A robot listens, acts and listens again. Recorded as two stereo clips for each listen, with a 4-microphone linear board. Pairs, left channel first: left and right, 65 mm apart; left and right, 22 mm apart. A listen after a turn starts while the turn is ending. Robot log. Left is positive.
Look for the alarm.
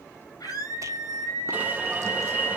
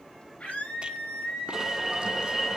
note: The alarm: about 25° right or 155° right.
cmd yaw -25
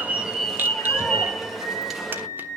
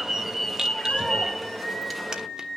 end: Found it: an alarm, straight ahead.